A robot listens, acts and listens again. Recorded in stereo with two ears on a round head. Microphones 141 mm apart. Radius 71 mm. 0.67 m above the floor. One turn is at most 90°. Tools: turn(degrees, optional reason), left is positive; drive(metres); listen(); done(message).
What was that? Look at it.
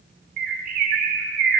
turn(degrees=-55, reason="The bird: about 55° right or 125° right.")
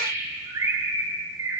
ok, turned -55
turn(degrees=-25, reason="So it is at 25° right.")
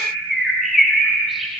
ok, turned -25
done("Facing the bird, under 1 m away.")